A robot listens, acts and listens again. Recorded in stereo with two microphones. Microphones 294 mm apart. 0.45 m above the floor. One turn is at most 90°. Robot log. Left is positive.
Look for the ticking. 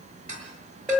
cmd yaw -90
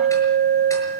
cmd idle
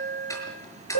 note: The ticking is now 10° left.
cmd yaw +10
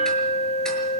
cmd idle
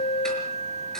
cmd idle
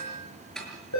end: Facing the ticking.